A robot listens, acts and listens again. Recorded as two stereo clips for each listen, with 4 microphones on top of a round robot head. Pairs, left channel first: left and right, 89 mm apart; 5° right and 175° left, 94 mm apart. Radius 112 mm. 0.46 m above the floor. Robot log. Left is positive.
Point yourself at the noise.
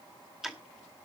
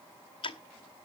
end: Facing the ticking, 2 to 4 m away.